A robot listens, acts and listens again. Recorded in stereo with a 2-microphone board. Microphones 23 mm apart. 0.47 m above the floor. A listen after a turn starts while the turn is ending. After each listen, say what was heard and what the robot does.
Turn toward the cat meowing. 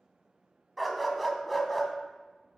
Keep listening.
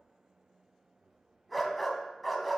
Keep listening.
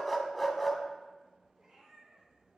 The cat meowing: about 35° right or 145° right. Turn 35° right.
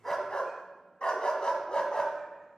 Keep listening.
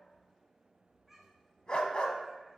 Facing the cat meowing.